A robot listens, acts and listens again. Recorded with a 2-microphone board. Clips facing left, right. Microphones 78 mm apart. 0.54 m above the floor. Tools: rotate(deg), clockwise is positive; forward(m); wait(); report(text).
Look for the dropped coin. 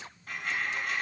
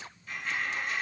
rotate(-60)
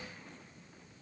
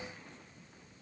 wait()
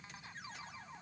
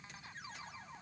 report("I heard a dropped coin, but can't make it out now. It was about straight ahead or 60° left.")